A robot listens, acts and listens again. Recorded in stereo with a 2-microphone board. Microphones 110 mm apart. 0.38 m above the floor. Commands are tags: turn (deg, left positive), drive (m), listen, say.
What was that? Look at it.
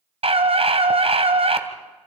<turn deg="-65"/>
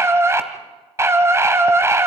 <turn deg="-30"/>
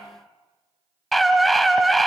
<say>Facing the scream, 2 to 4 m away.</say>